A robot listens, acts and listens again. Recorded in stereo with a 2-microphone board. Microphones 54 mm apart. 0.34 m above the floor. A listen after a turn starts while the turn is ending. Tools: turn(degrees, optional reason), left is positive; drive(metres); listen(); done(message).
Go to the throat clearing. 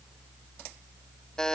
listen()
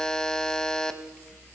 listen()
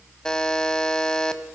done("I can't make out throat clearing to turn to.")